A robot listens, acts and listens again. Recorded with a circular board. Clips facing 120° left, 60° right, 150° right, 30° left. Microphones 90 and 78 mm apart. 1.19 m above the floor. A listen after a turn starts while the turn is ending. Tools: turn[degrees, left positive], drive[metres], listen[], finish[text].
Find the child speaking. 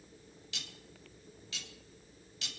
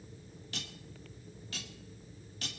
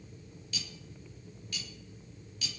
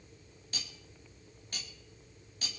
Action: listen[]
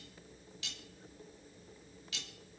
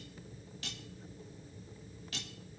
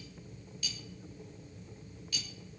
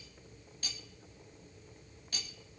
Action: listen[]
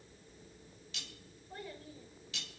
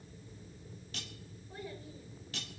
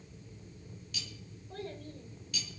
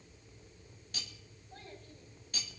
Thought: The child speaking: 150° right.
Action: turn[-150]
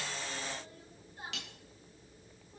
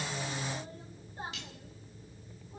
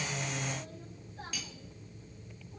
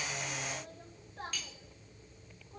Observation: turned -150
Action: finish[Found it: a child speaking, straight ahead.]